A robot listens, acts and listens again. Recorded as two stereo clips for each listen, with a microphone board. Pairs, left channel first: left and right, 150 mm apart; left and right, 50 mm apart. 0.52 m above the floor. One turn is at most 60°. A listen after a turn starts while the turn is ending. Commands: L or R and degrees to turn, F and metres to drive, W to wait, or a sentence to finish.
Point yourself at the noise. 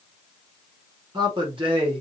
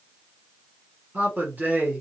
R35
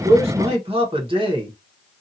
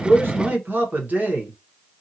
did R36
R30
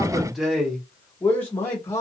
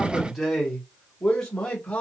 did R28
L15
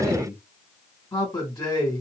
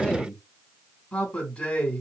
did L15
L15
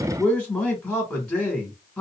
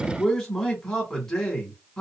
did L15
Found it: a man speaking, straight ahead.